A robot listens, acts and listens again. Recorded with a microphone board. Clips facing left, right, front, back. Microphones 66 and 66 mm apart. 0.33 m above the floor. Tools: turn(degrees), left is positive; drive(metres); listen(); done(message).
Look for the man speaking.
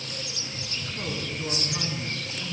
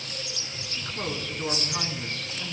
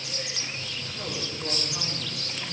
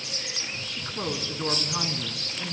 turn(degrees=-155)
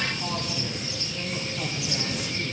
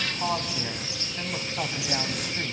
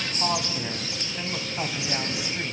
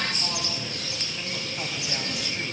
turn(degrees=-70)
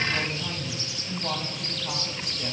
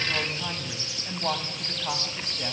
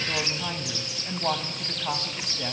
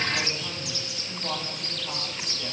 turn(degrees=-35)
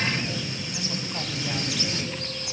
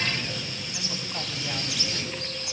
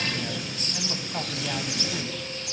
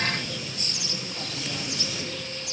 listen()
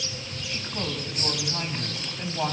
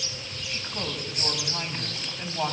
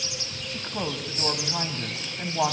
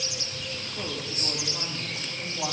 done("Found it: a man speaking, straight ahead, 1 to 2 m away.")